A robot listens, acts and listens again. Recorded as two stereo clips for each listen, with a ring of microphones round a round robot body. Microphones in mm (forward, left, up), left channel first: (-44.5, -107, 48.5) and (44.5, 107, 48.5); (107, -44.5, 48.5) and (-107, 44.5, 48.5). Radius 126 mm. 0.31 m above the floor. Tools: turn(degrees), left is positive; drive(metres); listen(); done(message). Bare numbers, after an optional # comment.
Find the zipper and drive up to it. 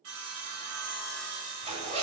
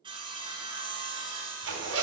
# The zipper: 130° left.
turn(130)
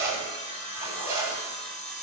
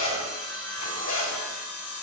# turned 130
# The zipper is now 10° right.
turn(-10)
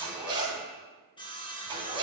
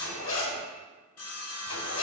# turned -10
drive(1.0)
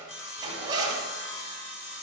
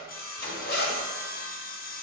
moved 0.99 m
drive(1.0)
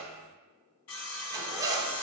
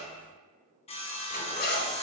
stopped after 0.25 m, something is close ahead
done("I am next to the zipper.")